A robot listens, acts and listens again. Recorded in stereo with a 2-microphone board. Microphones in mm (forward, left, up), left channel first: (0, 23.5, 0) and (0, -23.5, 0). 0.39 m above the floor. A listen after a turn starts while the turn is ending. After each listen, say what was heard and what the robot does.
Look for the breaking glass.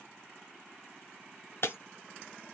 The breaking glass: about 60° left or 120° left. Turn 60° left.
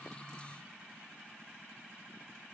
Keep listening.
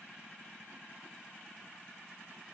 I heard breaking glass, but can't make it out now. It was about straight ahead or 60° left.